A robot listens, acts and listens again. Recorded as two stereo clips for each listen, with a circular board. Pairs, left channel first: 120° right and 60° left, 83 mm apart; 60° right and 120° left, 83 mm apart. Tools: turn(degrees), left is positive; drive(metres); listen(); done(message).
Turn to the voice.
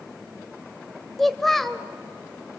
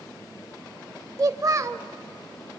turn(degrees=155)
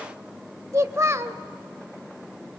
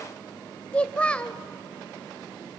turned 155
turn(degrees=15)
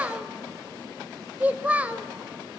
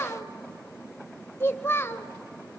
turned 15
turn(degrees=-10)
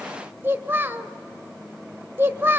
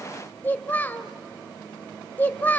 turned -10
done("Found it: a child speaking, straight ahead.")